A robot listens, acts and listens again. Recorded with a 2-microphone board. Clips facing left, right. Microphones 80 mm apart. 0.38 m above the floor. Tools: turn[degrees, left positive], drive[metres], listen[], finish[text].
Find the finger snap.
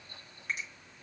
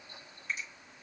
Thought: The finger snap: about 60° left or 120° left.
Action: turn[60]
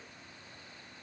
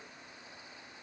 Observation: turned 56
Action: listen[]
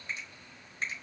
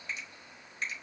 Thought: So it is at 35° left.
Action: turn[35]
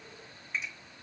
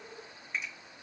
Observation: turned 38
Action: finish[Facing the finger snap, 1 to 2 m away.]